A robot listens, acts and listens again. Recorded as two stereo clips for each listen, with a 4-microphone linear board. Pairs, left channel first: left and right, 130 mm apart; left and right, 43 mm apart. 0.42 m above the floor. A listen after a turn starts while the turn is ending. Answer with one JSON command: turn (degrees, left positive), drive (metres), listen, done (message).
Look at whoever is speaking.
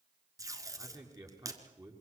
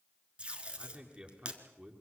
{"turn": -30}
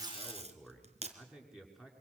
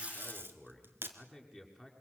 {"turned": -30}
{"done": "Found it: a man speaking, straight ahead."}